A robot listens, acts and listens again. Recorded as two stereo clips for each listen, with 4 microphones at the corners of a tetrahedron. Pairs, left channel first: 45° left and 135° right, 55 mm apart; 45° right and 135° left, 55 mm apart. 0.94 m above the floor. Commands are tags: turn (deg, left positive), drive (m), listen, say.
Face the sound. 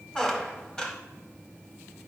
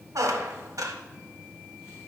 <turn deg="120"/>
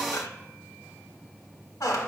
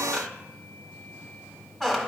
<turn deg="40"/>
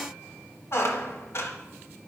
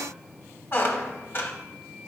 <say>Facing the squeak, under 1 m away.</say>